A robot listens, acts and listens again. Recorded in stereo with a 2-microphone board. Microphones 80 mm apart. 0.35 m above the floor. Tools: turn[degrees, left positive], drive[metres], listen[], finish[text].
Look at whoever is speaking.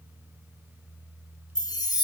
Action: listen[]
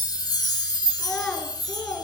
Action: turn[30]
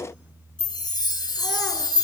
Action: listen[]
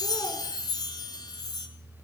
Action: listen[]
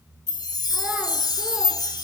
Action: finish[I heard a child speaking, but can't make it out now. It was about 15° right or 135° left.]